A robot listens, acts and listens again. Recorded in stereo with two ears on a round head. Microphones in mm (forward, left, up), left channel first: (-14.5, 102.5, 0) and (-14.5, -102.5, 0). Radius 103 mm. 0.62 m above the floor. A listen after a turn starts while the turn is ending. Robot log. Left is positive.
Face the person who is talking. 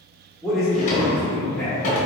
cmd yaw +30
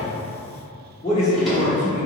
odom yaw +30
note: So it is at 145° left.
cmd yaw +145
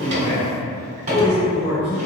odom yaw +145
end: Facing the man speaking, 1 to 2 m away.